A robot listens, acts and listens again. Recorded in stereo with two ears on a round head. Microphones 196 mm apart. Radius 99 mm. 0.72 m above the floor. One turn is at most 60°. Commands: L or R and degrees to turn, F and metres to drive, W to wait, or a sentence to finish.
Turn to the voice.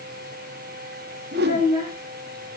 R30
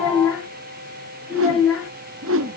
Found it: a child speaking, straight ahead.